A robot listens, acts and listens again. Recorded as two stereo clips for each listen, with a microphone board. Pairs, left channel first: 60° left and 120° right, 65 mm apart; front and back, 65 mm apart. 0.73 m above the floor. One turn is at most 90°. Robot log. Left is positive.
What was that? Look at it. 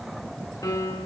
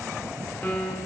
note: The piano: 65° left.
cmd yaw +65
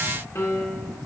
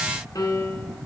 note: The piano is now 10° left.
cmd yaw +10
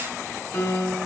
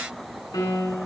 end: Found it: a piano, straight ahead, 1 to 2 m away.